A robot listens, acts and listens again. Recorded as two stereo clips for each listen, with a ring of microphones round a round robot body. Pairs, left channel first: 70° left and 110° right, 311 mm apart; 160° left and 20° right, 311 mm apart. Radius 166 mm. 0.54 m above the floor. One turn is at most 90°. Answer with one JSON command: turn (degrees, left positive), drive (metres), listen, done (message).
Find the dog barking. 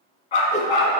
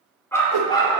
{"turn": 85}
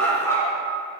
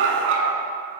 {"turn": -15}
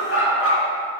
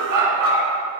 {"turn": 15}
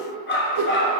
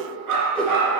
{"turn": 15}
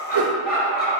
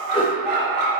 {"done": "Found it: a dog barking, straight ahead, 2 to 4 m away."}